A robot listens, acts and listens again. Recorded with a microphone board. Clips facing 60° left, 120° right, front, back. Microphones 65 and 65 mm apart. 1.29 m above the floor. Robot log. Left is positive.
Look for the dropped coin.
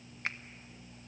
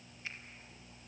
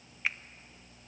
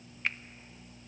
cmd idle
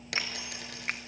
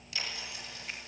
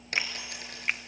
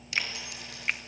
note: The dropped coin: 40° left.
cmd yaw +40
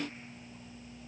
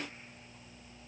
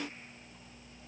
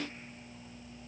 end: Facing where the dropped coin came from. I can't hear it now.